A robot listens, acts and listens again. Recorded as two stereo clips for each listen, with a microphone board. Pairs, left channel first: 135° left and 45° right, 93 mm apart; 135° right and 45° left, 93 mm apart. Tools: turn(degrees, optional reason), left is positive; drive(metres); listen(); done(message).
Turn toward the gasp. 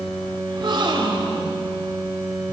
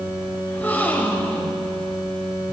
turn(degrees=-70, reason="The gasp: 70° right.")
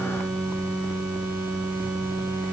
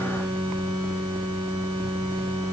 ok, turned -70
done("I heard a gasp from this way, but can't make it out now.")